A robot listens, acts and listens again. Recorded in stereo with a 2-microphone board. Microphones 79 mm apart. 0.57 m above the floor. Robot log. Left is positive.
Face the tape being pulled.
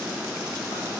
cmd idle
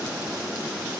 cmd idle
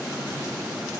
end: I can't make out tape being pulled.